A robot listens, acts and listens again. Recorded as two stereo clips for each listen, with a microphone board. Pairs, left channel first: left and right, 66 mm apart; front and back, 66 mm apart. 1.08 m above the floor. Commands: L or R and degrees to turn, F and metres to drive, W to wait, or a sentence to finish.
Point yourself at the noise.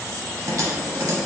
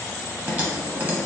R120
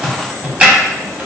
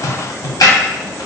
R20
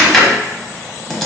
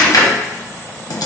Facing the typing on a keyboard.